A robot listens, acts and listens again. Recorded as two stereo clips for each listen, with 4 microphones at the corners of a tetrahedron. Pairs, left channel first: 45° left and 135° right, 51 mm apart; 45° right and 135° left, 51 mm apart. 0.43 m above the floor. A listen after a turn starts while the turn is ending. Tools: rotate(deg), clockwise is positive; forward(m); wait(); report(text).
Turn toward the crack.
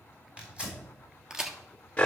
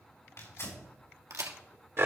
rotate(-145)
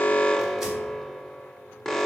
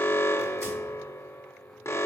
report("Facing where the crack came from. I can't hear it now.")